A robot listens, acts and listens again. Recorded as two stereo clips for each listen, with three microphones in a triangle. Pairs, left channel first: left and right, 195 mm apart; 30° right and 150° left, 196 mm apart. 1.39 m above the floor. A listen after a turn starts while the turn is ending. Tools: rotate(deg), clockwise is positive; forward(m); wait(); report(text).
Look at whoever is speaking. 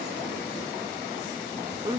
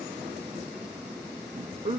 rotate(155)
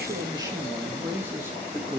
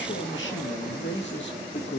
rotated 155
rotate(10)
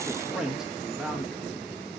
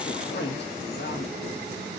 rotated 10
report("Facing the man speaking, 2 to 4 m away.")